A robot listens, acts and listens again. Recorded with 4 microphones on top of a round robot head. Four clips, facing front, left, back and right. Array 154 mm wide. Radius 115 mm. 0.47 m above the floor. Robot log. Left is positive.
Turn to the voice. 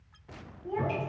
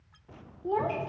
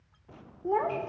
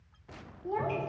note: The child speaking: 150° left.
cmd yaw +150
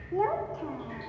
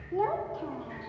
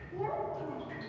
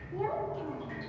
note: The child speaking is now 35° left.
cmd yaw +35
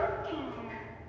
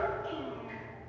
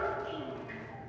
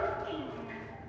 end: Found it: a child speaking, straight ahead.